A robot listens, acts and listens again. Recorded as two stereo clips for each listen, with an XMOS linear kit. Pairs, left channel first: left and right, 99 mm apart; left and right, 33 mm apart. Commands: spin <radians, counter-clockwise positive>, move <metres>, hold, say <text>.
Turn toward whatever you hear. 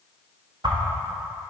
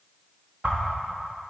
spin -0.79
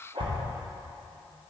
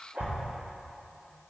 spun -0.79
spin -1.31
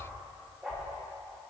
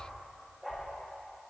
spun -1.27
hold
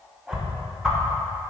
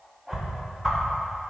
say Facing the whoosh.